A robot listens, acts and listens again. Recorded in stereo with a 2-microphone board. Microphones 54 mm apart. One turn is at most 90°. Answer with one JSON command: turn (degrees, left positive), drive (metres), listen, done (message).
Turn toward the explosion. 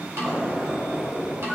{"turn": -25}
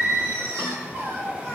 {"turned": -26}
{"listen": true}
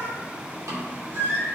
{"done": "I heard an explosion, but can't make it out now. It was about straight ahead or 130° right."}